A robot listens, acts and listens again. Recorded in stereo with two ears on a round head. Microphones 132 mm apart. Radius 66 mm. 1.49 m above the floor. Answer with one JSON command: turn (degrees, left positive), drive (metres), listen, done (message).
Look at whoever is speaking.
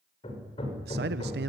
{"turn": -90}
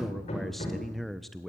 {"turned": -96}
{"done": "Facing the man speaking, under 1 m away."}